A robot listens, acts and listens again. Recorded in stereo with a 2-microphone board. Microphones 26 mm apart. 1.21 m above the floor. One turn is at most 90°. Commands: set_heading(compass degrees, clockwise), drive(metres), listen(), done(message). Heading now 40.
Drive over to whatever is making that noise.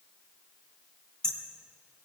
set_heading(15)
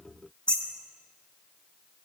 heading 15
set_heading(285)
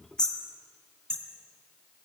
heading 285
set_heading(250)
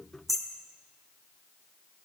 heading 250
drive(1.0)
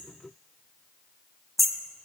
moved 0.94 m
drive(1.0)
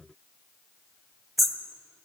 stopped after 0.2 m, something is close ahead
done("Arrived at the hammering, straight ahead.")